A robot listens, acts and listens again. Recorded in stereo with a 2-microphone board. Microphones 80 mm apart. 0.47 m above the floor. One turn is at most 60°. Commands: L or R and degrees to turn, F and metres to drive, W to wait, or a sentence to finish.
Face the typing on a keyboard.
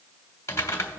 L35
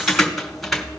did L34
Found it: typing on a keyboard, straight ahead.